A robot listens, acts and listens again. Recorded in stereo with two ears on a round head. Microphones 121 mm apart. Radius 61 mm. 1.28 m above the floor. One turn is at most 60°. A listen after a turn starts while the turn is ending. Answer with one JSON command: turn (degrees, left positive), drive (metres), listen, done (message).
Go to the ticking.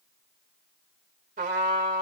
{"listen": true}
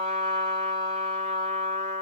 {"listen": true}
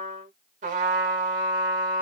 {"done": "I can't make out ticking to turn to."}